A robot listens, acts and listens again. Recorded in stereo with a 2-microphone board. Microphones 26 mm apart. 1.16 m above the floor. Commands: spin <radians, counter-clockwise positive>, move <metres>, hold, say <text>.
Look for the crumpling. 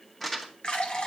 spin 0.52
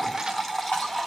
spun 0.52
hold
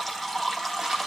hold
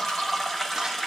say I heard crumpling, but can't make it out now. It was about 20° right or 140° left.